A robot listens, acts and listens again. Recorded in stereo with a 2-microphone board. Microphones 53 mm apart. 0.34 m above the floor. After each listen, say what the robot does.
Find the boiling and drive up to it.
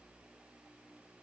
Keep listening.
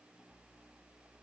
Keep listening.
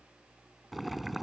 Turn 30° left.
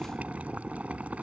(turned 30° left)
Turn 30° right.
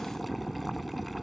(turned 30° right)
Drive 1.0 m forward.
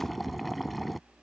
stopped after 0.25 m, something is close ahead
Blocked. The boiling is further on, straight ahead.